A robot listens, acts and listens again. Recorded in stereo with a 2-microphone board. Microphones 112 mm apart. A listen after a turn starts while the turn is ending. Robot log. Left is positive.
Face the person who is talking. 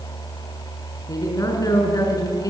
note: The woman speaking: about 35° left or 145° left.
cmd yaw +35
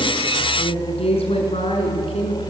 note: So it is at 115° left.
cmd yaw +115
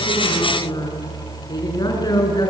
note: The woman speaking is now 40° left.
cmd yaw +40
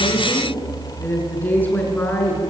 note: The woman speaking is now 15° left.
cmd yaw +15
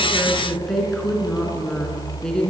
end: Facing the woman speaking.